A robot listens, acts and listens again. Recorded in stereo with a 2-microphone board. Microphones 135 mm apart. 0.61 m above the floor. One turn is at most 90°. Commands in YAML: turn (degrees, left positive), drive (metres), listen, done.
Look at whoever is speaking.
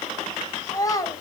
turn: 25
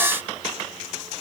listen: true
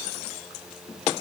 listen: true
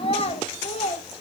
turn: 90
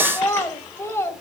turn: 20
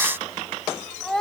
done: "Facing the child speaking, 2 to 4 m away."